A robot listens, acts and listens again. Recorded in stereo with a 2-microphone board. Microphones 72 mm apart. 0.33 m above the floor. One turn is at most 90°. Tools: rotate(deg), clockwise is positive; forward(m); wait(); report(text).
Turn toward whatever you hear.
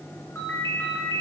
rotate(-30)
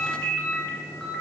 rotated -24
rotate(-10)
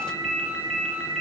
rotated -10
report("Found it: a ringtone, straight ahead.")